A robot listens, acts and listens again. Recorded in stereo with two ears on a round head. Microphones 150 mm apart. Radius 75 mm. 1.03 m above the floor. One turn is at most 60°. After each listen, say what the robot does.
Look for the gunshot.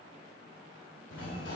Keep listening.
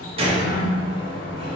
Turn 35° right.
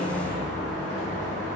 Keep listening.
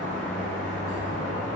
I heard a gunshot, but can't make it out now. It was about straight ahead or 110° right.